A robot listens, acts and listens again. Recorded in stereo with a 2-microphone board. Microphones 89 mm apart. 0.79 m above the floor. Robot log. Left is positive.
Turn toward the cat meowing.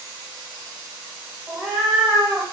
cmd yaw +30
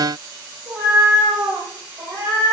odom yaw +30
note: So it is at 35° right.
cmd yaw -35
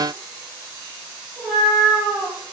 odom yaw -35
end: Facing the cat meowing, over 4 m away.